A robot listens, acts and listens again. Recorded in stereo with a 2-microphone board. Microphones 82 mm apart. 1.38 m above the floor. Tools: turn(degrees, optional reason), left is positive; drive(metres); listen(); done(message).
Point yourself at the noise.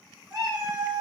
turn(degrees=-55, reason="The cat meowing: about 55° right or 125° right.")
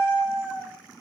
turn(degrees=-65, reason="So it is at 65° right.")
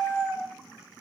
turn(degrees=20, reason="The cat meowing is now 20° left.")
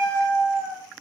done("Facing the cat meowing.")